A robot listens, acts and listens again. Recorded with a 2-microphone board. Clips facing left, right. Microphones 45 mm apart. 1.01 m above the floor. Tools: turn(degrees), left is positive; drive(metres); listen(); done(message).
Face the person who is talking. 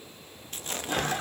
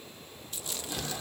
listen()
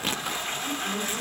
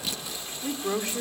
turn(degrees=-90)
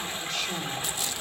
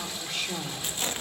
done("Facing the woman speaking.")